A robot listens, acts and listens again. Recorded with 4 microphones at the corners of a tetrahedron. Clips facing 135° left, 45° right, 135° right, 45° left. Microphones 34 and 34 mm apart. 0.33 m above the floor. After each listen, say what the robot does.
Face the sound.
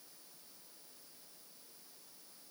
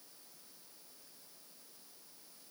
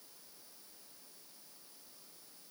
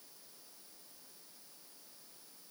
Keep listening.
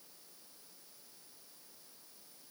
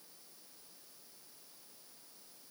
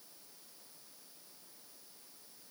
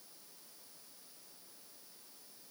Keep listening.
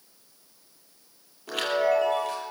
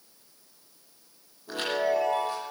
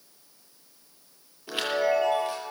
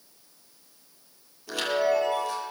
Turn 160° left.
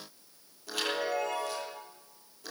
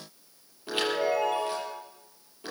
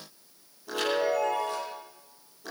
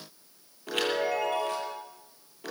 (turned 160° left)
Turn 15° left.
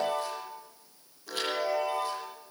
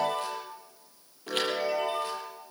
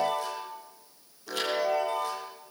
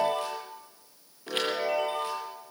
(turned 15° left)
Facing the chime.